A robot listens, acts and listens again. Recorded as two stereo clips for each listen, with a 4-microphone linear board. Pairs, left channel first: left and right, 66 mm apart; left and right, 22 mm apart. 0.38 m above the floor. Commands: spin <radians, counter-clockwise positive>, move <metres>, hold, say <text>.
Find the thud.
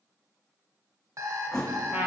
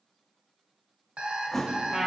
spin 0.52
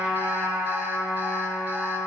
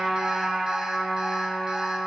hold
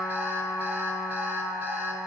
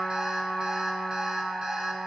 say I heard a thud, but can't make it out now. It was about 20° right or 140° left.